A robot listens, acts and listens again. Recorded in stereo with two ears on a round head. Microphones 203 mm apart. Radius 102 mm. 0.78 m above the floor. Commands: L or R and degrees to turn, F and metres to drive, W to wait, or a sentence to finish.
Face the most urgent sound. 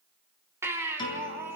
R30
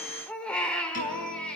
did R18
Facing the baby crying, 2 to 4 m away.